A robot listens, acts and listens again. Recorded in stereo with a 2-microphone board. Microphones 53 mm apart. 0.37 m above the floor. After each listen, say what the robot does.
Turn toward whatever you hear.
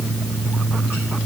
Keep listening.
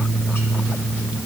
Keep listening.
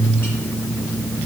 I can't make out anything to turn to.